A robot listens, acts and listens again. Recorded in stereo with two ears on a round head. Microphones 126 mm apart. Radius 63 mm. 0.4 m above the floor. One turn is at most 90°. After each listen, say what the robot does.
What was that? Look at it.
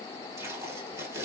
Turn 20° right.
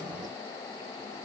Keep listening.
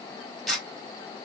Facing the tape being pulled.